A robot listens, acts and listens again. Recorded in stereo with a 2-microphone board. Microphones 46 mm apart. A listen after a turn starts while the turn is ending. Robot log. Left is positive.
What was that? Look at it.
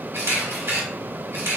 cmd yaw -90
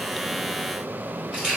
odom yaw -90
note: So it is at 10° right.
cmd yaw -10
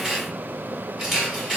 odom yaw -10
end: Found it: a camera shutter, straight ahead.